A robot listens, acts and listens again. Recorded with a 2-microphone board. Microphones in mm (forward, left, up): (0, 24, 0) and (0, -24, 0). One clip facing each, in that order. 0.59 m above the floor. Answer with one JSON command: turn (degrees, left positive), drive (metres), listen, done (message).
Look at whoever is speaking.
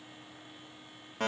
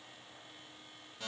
{"listen": true}
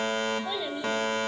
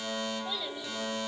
{"turn": 20}
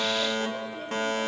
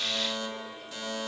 {"listen": true}
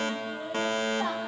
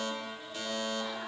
{"listen": true}
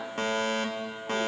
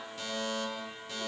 {"done": "I heard a child speaking, but can't make it out now. It was about straight ahead or 140° left."}